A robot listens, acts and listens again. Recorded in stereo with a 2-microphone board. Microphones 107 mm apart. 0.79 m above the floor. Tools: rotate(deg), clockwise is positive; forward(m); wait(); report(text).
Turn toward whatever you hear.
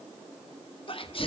rotate(-55)
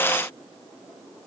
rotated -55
wait()
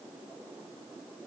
report("I heard a sneeze, but can't make it out now. It was about straight ahead or 70° left.")